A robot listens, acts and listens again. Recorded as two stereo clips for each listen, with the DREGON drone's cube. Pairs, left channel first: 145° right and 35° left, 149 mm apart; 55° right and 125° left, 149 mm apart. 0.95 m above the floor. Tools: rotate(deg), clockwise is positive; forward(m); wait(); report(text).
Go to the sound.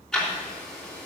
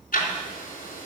rotate(60)
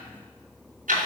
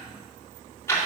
rotate(-15)
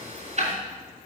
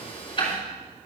forward(1.0)
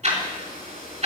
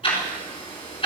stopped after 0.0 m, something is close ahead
report("Something is in my way. I am facing the ticking but have not reached it.")